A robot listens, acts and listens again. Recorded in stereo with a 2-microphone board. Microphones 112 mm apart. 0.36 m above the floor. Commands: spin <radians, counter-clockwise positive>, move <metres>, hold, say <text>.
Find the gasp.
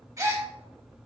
spin -0.52
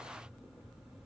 hold
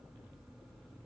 say I heard a gasp, but can't make it out now. It was about straight ahead or 120° right.